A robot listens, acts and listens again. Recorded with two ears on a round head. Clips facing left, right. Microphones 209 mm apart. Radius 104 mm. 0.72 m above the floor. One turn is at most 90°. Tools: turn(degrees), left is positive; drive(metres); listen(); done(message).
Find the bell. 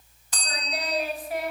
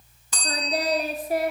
turn(degrees=-70)
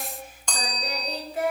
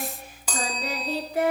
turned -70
done("Found it: a bell, straight ahead.")